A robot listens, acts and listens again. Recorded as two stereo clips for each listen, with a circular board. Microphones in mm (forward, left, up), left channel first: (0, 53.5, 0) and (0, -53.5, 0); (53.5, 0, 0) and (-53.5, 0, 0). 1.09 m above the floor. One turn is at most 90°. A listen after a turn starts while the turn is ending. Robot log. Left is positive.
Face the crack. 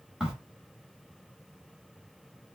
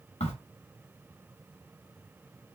end: Found it: a crack, straight ahead, 1 to 2 m away.